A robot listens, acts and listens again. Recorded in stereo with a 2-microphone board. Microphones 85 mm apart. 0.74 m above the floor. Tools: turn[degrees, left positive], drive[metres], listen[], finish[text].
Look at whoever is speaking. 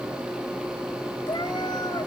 Action: listen[]
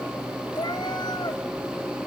Action: listen[]
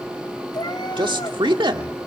Thought: The man speaking: about 70° right or 110° right.
Action: turn[-70]
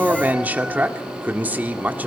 Thought: So it is at 20° right.
Action: turn[-20]
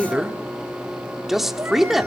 Action: finish[Found it: a man speaking, straight ahead, 1 to 2 m away.]